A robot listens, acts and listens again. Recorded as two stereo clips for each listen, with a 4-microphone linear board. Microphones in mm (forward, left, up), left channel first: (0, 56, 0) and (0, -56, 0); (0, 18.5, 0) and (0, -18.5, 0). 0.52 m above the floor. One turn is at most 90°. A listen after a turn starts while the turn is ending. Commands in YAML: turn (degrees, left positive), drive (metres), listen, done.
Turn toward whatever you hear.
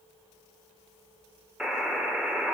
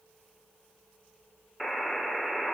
turn: -30
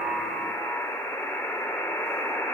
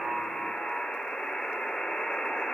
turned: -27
turn: 20
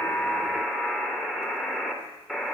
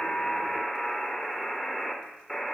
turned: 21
done: "Found it: a buzzer, straight ahead."